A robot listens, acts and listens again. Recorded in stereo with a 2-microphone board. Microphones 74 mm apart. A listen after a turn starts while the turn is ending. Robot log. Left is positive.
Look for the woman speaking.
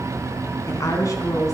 note: The woman speaking: about 45° left or 135° left.
cmd yaw +45
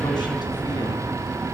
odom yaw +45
cmd idle
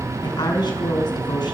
note: So it is at 85° left.
cmd yaw +85
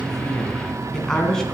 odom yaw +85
end: Found it: a woman speaking, straight ahead, 2 to 4 m away.